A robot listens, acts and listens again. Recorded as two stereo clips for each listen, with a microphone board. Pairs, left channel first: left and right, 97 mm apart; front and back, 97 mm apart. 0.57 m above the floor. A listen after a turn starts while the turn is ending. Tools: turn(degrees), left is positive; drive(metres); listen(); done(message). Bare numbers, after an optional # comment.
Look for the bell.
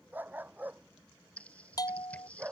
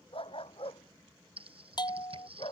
# The bell: 40° left.
turn(40)
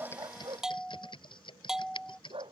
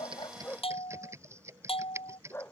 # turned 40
done("Found it: a bell, straight ahead.")